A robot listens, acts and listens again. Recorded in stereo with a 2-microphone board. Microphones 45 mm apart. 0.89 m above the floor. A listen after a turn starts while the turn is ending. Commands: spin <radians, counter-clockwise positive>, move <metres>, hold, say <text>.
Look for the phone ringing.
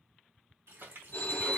spin 0.96
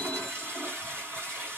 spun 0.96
hold
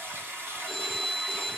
say Found it: a phone ringing, straight ahead, under 1 m away.